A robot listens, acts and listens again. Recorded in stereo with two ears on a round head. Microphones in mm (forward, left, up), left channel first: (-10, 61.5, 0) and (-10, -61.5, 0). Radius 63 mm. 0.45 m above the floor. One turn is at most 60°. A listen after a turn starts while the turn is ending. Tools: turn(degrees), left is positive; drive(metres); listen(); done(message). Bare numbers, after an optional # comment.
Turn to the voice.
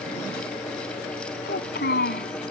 # The child speaking: about 75° left or 105° left.
turn(60)
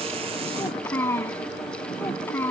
# So it is at 15° left.
turn(15)
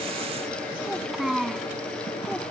done("Facing the child speaking.")